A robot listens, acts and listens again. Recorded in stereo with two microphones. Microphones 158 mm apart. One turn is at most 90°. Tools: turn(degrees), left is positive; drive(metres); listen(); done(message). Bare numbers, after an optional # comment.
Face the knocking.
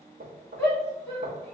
# The knocking: about 70° right or 110° right.
turn(-70)
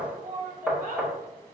done("Facing the knocking.")